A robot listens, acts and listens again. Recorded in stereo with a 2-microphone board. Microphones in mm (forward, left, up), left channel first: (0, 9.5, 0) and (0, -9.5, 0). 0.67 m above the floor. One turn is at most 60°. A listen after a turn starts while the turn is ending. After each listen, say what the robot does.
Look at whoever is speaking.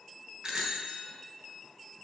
Keep listening.
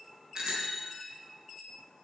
Keep listening.
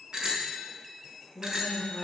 Turn 20° right.
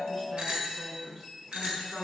Turn 60° right.
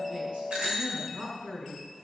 Turn 60° right.
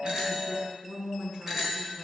Turn 55° right.
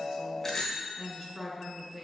Turn 15° right.
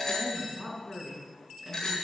Facing the woman speaking.